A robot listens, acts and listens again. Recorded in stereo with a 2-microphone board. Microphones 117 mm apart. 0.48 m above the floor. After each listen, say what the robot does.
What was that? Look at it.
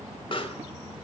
Turn 45° left.
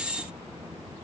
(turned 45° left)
Keep listening.
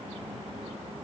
I heard a pop, but can't make it out now. It was about straight ahead or 90° left.